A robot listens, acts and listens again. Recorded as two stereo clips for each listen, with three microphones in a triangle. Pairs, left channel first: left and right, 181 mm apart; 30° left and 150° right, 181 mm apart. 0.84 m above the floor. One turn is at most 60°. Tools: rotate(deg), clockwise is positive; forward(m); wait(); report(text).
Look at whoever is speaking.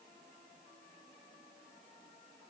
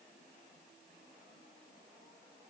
wait()
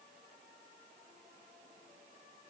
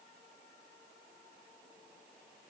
wait()
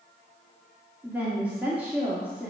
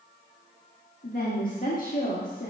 rotate(10)
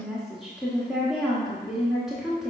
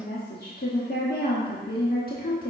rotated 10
report("Found it: a woman speaking, straight ahead.")